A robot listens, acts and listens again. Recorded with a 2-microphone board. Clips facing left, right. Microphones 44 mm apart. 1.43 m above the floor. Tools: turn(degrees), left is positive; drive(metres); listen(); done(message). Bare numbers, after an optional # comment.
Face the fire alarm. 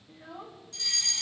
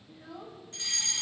# The fire alarm: about 35° right or 145° right.
turn(-35)
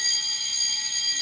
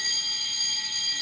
# So it is at 10° right.
turn(-10)
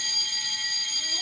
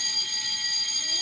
done("Facing the fire alarm, 1 to 2 m away.")